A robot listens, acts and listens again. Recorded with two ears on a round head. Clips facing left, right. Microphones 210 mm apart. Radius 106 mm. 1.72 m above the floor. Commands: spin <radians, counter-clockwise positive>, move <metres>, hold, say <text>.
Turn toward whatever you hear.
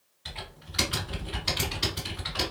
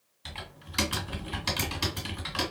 spin -1.05
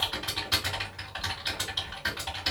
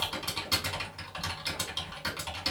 spin -0.79
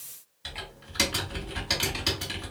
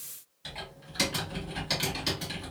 say Facing the typing on a keyboard, 1 to 2 m away.